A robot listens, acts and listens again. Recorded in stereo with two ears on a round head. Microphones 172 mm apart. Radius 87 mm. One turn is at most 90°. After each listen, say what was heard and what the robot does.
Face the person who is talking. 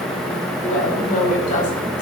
The woman speaking: about 40° left or 140° left. Turn 40° left.
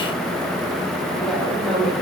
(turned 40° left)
Facing the woman speaking, over 4 m away.